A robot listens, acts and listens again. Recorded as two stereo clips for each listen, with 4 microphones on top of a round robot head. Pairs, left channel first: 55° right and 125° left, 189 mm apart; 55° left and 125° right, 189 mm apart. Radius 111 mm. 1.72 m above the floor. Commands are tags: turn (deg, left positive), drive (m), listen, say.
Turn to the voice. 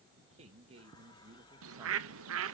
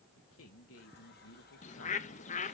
<turn deg="60"/>
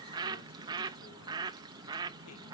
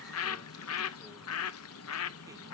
<listen/>
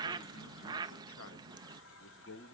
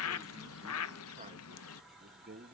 <turn deg="-75"/>
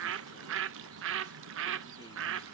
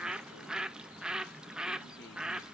<listen/>
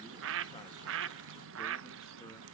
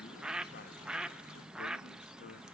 <listen/>
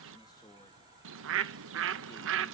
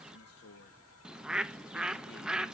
<turn deg="15"/>
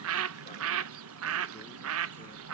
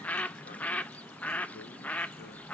<listen/>
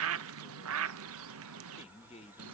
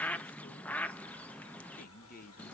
<say>Found it: a man speaking, straight ahead, 2 to 4 m away.</say>